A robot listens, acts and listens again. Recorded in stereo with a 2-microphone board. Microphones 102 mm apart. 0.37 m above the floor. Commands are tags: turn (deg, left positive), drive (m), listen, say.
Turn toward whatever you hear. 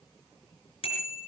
<turn deg="65"/>
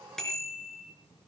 <say>Found it: a bicycle bell, straight ahead, 2 to 4 m away.</say>